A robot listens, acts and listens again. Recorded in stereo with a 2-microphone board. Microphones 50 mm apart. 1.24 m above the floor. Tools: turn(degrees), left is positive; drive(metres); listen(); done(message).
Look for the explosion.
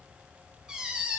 listen()
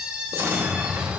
turn(degrees=-55)
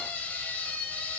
listen()
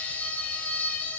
done("I heard an explosion, but can't make it out now. It was about straight ahead or 70° right.")